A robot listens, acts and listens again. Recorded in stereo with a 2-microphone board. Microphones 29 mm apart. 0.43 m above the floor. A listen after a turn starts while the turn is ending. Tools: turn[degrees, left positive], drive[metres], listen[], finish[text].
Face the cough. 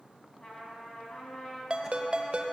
Action: listen[]
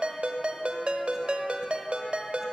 Action: listen[]
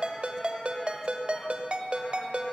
Action: finish[I can't make out a cough to turn to.]